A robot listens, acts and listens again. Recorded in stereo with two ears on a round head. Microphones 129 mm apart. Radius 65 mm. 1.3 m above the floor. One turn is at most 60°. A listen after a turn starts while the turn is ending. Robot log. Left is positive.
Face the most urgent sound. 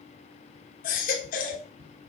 note: The baby crying: about 65° left or 115° left.
cmd yaw +60
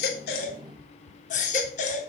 note: So it is at 55° left.
cmd yaw +55
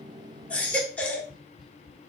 note: The baby crying is now 10° left.
cmd yaw +10
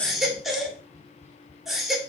end: Facing the baby crying.